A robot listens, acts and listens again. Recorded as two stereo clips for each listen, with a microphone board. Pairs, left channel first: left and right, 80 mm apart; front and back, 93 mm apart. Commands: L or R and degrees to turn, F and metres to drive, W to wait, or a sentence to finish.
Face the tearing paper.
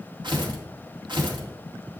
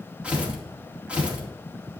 R100
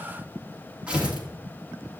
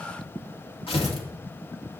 R15
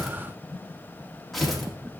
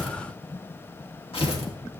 Facing the tearing paper.